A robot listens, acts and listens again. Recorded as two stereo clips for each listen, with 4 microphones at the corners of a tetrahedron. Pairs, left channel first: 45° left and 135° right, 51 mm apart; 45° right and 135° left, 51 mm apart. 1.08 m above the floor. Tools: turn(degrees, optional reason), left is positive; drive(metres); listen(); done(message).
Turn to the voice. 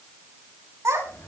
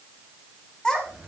turn(degrees=-125, reason="The child speaking: 125° right.")
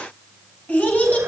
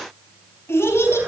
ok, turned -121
turn(degrees=-15, reason="The child speaking is now 15° right.")
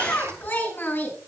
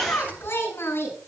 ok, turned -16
done("Facing the child speaking.")